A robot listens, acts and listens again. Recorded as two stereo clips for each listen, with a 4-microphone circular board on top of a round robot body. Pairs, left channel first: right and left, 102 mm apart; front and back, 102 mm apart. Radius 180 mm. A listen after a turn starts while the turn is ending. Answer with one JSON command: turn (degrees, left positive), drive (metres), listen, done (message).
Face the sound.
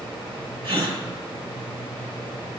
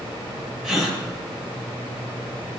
{"turn": 100}
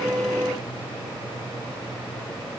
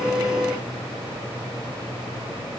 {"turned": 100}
{"done": "I heard a gasp from this way, but can't make it out now."}